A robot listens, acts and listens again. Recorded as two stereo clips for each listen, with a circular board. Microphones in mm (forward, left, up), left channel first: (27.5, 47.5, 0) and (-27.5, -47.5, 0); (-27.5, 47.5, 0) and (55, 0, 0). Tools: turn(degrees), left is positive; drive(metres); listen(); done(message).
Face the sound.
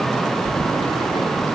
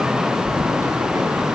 turn(degrees=30)
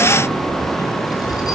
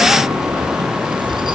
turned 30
done("Found it: keys jangling, straight ahead, over 4 m away.")